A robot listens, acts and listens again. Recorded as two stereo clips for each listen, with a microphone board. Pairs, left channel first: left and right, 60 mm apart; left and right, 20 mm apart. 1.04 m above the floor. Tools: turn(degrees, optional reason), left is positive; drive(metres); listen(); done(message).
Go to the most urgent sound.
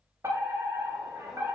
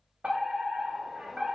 turn(degrees=-60, reason="The fire alarm: about 60° right or 120° right.")
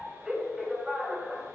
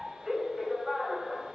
turn(degrees=-10, reason="So it is at 10° right.")
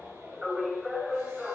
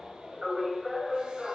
drive(metres=1.0)
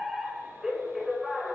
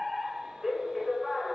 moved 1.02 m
turn(degrees=-10, reason="The fire alarm is now 10° right.")
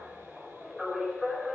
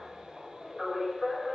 drive(metres=1.0)
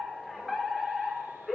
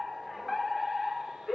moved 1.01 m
drive(metres=1.0)
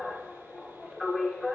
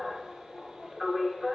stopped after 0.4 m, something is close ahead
done("Arrived at the fire alarm, straight ahead.")